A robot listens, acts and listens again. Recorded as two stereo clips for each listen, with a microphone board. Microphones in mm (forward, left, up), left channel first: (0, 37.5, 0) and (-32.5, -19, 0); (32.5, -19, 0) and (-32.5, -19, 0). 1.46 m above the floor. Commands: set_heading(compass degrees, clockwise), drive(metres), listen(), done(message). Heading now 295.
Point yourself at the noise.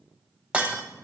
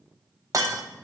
set_heading(130)
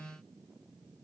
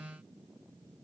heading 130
done("Facing where the breaking glass came from. I can't hear it now.")